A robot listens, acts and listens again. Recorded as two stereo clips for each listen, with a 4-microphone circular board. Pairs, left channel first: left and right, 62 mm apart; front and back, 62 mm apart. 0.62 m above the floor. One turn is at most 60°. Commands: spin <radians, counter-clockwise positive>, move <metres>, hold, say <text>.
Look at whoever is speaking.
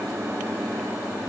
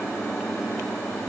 hold
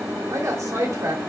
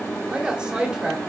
spin -1.05
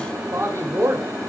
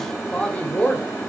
spin -1.05
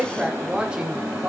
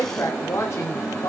spin -0.35
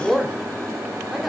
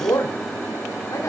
say Found it: a woman speaking, straight ahead, 1 to 2 m away.